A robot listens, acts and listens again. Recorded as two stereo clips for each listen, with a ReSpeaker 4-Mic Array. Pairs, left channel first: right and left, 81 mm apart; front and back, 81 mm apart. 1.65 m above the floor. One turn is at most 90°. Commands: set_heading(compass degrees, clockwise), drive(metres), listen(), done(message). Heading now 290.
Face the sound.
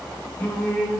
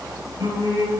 set_heading(20)
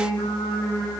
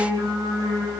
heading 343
set_heading(73)
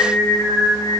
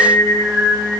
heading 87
set_heading(142)
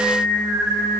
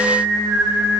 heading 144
done("Facing the singing.")